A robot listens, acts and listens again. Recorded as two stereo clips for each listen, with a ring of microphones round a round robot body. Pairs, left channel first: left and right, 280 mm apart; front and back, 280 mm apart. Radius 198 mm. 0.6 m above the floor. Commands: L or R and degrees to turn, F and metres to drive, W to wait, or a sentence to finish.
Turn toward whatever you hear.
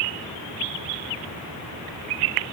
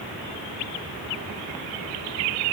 W
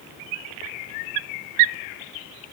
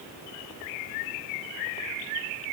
W
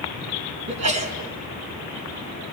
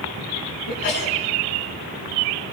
R65
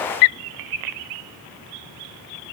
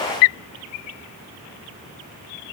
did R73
L10
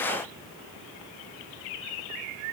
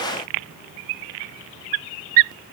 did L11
I heard a sneeze from this way, but can't make it out now.